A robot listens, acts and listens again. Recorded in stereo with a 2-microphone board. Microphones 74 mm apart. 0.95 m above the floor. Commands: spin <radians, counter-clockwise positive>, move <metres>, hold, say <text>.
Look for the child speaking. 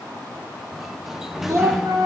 spin -0.87
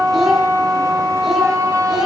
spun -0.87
say Facing the child speaking.